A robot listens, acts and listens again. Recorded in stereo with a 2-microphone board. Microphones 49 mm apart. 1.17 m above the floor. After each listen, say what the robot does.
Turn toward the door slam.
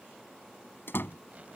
Turn 45° left.
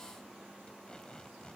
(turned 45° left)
Keep listening.
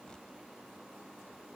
I heard a door slam, but can't make it out now. It was about straight ahead or 90° left.